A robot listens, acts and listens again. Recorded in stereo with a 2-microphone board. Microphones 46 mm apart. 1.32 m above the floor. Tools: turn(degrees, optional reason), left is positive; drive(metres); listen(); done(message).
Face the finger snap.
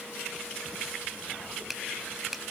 turn(degrees=-30)
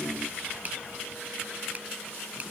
turn(degrees=-145, reason="So it is at 145° right.")
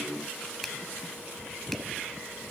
listen()
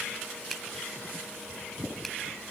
listen()
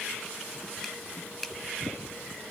done("Facing the finger snap.")